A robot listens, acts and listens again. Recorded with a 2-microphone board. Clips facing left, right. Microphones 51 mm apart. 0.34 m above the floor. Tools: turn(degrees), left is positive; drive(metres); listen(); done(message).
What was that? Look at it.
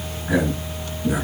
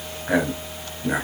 turn(degrees=-45)
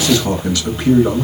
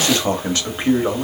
turn(degrees=-20)
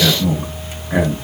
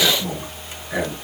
turn(degrees=20)
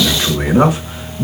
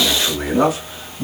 turn(degrees=30)
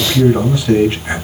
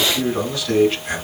turn(degrees=15)
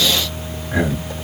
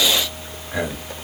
done("Facing the man speaking.")